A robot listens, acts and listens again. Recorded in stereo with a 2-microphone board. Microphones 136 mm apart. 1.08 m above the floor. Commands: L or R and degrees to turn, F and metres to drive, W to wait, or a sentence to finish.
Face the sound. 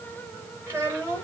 R20
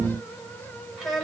Found it: a child speaking, straight ahead.